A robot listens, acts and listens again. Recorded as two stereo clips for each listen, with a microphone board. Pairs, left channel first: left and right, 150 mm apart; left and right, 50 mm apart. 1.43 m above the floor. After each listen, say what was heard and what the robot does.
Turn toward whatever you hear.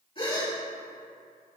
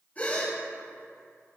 The gasp: about 40° left or 140° left. Turn 40° left.
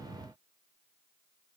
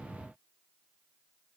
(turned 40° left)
Keep listening.
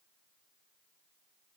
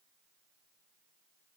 I heard a gasp, but can't make it out now. It was about straight ahead or 100° left.